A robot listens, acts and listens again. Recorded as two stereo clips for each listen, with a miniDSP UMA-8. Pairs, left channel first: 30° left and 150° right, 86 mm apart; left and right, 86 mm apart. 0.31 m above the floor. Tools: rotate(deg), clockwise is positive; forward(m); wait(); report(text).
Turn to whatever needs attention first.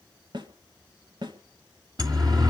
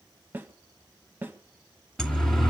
rotate(-175)
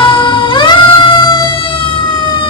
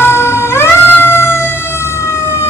rotate(-35)
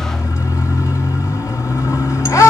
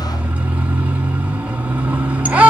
rotate(15)
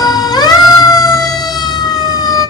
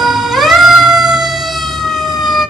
report("Facing the siren.")